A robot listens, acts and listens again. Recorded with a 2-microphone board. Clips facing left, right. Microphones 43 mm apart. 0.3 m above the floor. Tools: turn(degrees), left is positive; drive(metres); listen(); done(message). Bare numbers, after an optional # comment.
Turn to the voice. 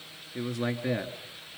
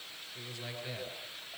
# The man speaking: about 65° left or 115° left.
turn(65)
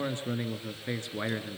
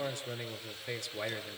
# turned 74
# So it is at 35° left.
turn(35)
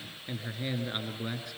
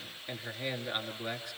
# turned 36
done("Facing the man speaking.")